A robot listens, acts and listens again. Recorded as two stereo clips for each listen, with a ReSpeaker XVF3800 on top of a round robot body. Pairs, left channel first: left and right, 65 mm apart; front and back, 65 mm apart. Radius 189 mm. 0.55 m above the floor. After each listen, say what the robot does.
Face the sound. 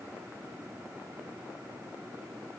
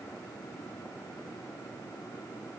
Keep listening.
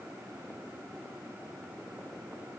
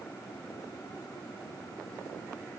Keep listening.
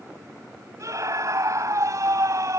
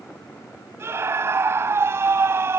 Turn 130° right.
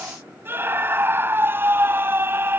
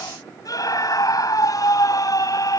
Turn 30° right.
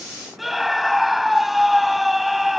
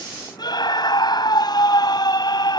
Found it: a scream, straight ahead.